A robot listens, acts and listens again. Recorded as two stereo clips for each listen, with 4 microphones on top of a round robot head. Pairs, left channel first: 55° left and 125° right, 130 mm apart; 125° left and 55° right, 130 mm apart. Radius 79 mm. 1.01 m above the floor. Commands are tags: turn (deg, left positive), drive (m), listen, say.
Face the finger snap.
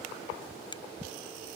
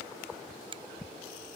<say>Facing the finger snap.</say>